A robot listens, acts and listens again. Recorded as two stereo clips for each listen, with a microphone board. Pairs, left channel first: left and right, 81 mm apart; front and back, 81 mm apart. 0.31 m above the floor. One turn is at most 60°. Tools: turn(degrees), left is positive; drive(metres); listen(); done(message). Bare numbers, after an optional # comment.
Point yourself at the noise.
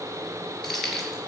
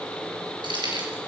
# The keys jangling: 175° left.
turn(60)
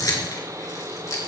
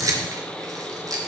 # The keys jangling is now 140° left.
turn(60)
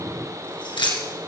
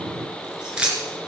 # The keys jangling is now 105° left.
turn(60)
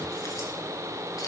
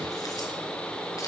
# Nothing new. It was at 45° left.
turn(45)
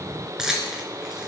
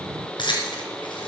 done("Facing the keys jangling, 2 to 4 m away.")